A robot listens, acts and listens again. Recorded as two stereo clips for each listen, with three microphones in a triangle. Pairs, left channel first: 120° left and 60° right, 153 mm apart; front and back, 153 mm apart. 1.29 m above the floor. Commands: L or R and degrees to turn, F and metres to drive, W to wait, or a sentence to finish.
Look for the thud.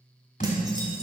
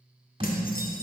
L130
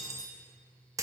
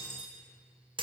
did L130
I heard a thud from this way, but can't make it out now.